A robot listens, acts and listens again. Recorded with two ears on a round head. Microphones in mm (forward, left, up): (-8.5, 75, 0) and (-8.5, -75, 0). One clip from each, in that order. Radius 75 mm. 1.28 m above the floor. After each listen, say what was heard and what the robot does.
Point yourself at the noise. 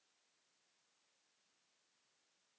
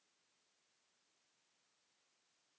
Keep listening.
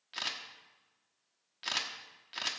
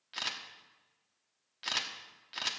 Turn 30° left.
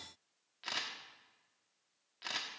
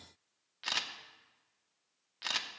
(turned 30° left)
So it is at 35° right. Turn 35° right.
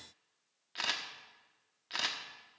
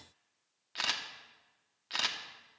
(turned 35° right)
The camera shutter is now 15° right. Turn 15° right.
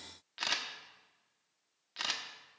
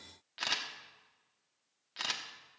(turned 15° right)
Found it: a camera shutter, straight ahead, 1 to 2 m away.